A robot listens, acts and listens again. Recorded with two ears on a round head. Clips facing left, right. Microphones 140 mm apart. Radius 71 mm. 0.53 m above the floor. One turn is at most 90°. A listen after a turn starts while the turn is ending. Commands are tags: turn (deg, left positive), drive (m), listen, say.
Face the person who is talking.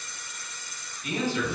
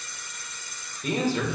<turn deg="-35"/>
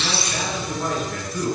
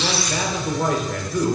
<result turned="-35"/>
<turn deg="-90"/>
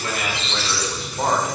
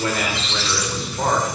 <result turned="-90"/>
<say>Facing the man speaking, 1 to 2 m away.</say>